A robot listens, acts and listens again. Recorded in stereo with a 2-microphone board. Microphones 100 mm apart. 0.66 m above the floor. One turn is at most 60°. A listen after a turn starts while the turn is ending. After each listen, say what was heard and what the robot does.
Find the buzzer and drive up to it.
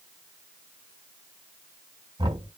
Keep listening.
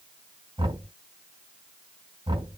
Keep listening.
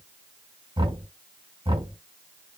I can't make out a buzzer to turn to.